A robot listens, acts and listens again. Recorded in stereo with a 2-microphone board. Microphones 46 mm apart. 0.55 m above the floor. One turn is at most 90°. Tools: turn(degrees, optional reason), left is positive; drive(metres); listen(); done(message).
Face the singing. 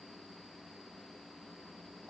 listen()
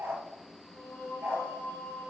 turn(degrees=55, reason="The singing: about 55° left or 125° left.")
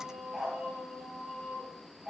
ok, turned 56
turn(degrees=-10, reason="So it is at 10° right.")
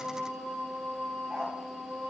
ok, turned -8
turn(degrees=-10, reason="The singing is now 10° right.")
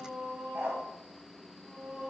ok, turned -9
done("Found it: singing, straight ahead, over 4 m away.")